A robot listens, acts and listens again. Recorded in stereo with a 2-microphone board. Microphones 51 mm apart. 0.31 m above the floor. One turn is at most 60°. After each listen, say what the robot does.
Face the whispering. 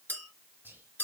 Turn 40° right.
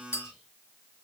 Keep listening.
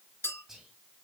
Turn 10° right.
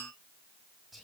Found it: whispering, straight ahead, 1 to 2 m away.